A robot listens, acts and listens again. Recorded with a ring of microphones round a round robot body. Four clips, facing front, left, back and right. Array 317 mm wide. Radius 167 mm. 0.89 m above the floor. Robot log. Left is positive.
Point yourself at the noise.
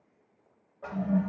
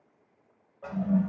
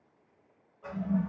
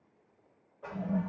note: The toilet flushing: 35° left.
cmd yaw +35
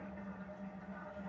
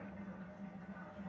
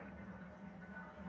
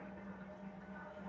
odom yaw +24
note: Nothing new. It was at 10° left.
cmd yaw +10
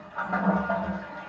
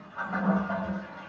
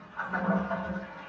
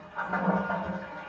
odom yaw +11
end: Facing the toilet flushing, 2 to 4 m away.